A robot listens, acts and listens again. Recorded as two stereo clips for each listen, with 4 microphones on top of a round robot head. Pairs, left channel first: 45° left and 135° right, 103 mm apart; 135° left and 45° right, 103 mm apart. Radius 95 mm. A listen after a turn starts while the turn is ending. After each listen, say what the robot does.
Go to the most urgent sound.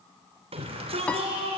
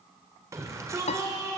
Turn 105° right.
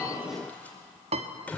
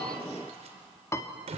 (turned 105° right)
Turn 30° right.
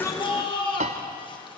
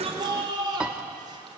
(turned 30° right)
Drive 1.0 m forward.
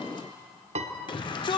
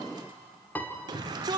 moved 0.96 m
Drive 1.0 m forward.
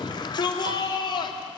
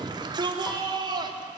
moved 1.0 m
Drive 1.0 m forward.
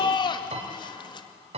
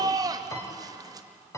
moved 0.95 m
Drive 1.0 m forward.
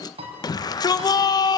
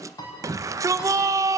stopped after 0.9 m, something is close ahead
Arrived at the shout, straight ahead.